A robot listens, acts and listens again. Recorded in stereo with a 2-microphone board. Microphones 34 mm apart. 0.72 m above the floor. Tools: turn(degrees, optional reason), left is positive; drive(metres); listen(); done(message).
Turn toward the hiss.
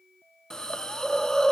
turn(degrees=20, reason="The hiss: about 20° left or 160° left.")
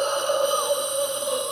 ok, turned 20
done("Found it: a hiss, straight ahead.")